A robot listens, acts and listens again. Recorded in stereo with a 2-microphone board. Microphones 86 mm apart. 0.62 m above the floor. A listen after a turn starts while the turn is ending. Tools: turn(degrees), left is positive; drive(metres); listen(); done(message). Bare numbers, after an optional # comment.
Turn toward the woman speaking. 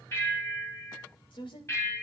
# The woman speaking: about 70° left or 110° left.
turn(70)
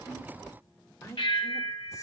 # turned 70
# So it is at 30° left.
turn(30)
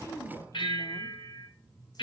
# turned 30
# The woman speaking is now 35° left.
turn(35)
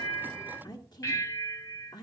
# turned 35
# The woman speaking is now 45° left.
turn(45)
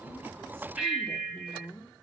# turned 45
# The woman speaking is now 10° left.
turn(10)
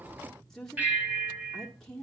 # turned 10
done("Facing the woman speaking.")